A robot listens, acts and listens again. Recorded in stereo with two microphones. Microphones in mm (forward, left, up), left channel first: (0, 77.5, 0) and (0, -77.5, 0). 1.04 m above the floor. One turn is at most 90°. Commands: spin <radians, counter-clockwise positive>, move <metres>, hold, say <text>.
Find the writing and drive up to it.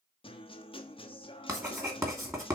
spin -0.35
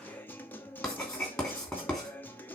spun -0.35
move 1.0
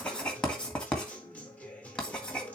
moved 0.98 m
move 1.0
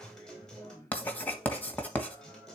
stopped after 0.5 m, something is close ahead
spin 0.17
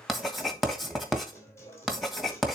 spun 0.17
say Arrived at the writing, straight ahead.